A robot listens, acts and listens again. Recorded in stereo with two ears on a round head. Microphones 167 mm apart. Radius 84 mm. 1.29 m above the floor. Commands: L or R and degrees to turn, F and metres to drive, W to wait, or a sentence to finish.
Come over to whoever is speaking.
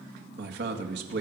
R65
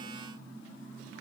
W
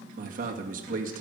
R50
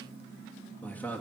L10
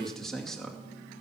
F1.0
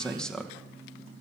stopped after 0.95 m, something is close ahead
I am next to the man speaking.